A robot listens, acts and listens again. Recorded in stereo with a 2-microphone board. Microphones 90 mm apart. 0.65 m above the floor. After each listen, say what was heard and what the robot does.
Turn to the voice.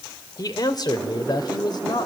The man speaking: about 55° left or 125° left. Turn 55° left.
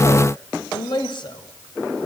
So it is at 60° left. Turn 60° left.
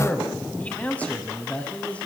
The man speaking is now 15° left. Turn 15° left.
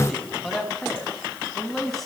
Found it: a man speaking, straight ahead.